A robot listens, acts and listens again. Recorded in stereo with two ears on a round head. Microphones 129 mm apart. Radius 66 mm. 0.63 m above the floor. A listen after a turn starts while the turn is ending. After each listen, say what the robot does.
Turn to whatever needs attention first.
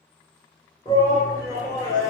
Turn 25° left.
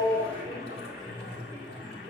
Facing the shout.